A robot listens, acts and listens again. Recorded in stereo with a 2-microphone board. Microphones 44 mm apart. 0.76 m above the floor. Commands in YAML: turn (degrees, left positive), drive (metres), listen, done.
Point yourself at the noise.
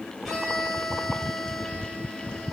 turn: 30
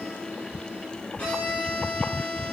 turn: 150
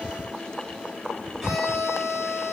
done: "Facing the violin, over 4 m away."